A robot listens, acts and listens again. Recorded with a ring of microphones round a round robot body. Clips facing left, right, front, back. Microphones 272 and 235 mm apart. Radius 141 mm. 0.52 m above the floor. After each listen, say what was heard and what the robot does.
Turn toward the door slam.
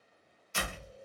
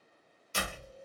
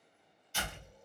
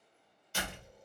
The door slam: 140° right. Turn 140° right.
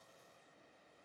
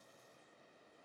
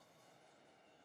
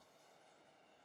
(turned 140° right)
Facing where the door slam came from. I can't hear it now.